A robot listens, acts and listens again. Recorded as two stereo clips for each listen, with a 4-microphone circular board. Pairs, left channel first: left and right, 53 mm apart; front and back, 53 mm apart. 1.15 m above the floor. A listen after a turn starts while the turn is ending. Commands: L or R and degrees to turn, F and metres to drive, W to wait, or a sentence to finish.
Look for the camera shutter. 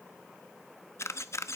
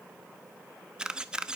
L110
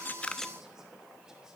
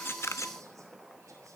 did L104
W
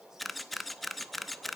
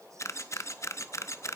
Found it: a camera shutter, straight ahead.